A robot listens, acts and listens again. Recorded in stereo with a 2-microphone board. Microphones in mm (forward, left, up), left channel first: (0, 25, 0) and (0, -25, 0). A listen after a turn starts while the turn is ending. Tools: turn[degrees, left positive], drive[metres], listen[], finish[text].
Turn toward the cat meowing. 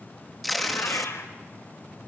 Thought: The cat meowing: about 65° left or 115° left.
Action: turn[65]
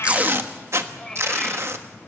Thought: So it is at 15° left.
Action: turn[15]
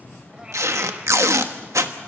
Action: listen[]
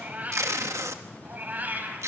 Thought: The cat meowing is now 35° right.
Action: turn[-35]
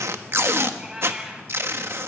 Thought: The cat meowing is now 15° right.
Action: turn[-15]
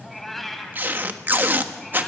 Action: finish[Found it: a cat meowing, straight ahead, 2 to 4 m away.]